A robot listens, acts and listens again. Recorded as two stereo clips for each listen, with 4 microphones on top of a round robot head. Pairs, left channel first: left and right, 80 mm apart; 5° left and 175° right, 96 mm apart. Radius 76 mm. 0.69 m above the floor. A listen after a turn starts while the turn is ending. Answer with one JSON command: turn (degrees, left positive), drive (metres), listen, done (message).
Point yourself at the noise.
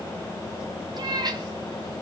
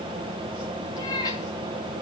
{"turn": -55}
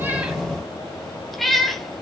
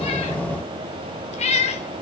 {"done": "Facing the cat meowing, 2 to 4 m away."}